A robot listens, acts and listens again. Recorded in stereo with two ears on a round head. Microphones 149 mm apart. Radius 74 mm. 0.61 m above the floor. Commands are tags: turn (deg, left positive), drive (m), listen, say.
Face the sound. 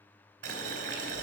<turn deg="-70"/>
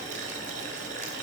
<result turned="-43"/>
<turn deg="-50"/>
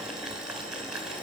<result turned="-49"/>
<say>Facing the boiling.</say>